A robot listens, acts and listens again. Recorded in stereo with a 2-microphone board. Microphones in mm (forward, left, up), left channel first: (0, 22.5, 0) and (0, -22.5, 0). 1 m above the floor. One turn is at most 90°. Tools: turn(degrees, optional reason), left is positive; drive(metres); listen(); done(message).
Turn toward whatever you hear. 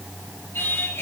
turn(degrees=90)
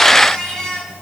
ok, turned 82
turn(degrees=15, reason="So it is at 15° left.")
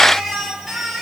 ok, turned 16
done("Facing the singing.")